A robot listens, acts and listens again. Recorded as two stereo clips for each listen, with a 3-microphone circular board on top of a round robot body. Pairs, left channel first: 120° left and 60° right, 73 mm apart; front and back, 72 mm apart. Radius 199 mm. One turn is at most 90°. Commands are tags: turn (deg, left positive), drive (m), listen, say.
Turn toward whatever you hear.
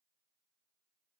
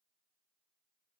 <listen/>
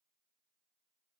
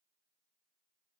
<listen/>
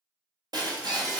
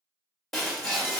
<turn deg="-85"/>
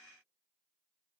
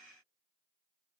<say>I heard breaking glass from this way, but can't make it out now.</say>